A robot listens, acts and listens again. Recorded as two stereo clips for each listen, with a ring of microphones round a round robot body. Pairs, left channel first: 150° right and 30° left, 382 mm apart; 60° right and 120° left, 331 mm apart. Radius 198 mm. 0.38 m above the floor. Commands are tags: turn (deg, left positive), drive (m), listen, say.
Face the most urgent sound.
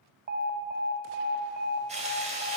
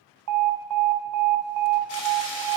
<turn deg="95"/>
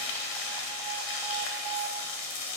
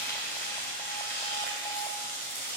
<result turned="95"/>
<listen/>
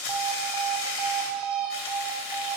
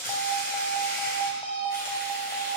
<turn deg="15"/>
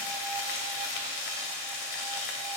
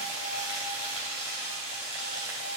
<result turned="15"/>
<listen/>
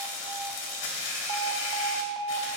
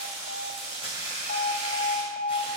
<say>Facing the alarm, 1 to 2 m away.</say>